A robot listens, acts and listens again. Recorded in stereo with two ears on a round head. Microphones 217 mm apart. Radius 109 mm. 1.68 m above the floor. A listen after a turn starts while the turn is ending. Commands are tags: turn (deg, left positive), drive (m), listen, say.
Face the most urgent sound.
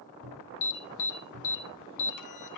<turn deg="90"/>
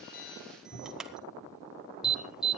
<say>Facing the alarm.</say>